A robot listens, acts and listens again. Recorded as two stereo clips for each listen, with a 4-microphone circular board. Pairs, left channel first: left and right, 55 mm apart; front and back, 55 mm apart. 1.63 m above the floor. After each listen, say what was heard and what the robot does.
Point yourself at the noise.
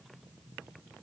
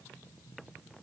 Keep listening.
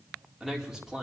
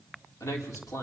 The man speaking: 10° right. Turn 10° right.
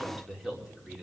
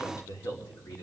Facing the man speaking, over 4 m away.